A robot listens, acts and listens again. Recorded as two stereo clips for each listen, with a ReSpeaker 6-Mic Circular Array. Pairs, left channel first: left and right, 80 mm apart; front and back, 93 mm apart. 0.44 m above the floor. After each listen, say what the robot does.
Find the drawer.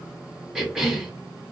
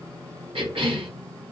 Keep listening.
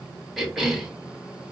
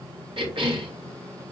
Keep listening.
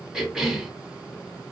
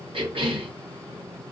I can't make out a drawer to turn to.